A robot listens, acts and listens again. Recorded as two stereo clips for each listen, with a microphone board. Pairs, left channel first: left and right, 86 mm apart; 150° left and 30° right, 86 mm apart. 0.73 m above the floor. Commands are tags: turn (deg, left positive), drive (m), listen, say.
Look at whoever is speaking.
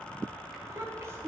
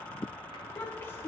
<turn deg="-150"/>
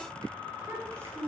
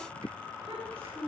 <turn deg="-30"/>
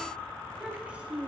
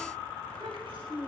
<turn deg="-15"/>
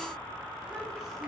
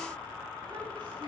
<listen/>
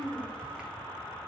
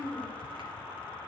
<say>Found it: a child speaking, straight ahead.</say>